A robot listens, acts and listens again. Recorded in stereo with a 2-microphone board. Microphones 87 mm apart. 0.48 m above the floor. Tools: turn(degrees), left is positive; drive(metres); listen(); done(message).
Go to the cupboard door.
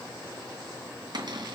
turn(degrees=-55)
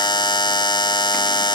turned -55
listen()
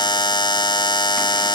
listen()
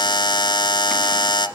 done("I heard a cupboard door, but can't make it out now. It was about straight ahead or 70° right. I did not reach it.")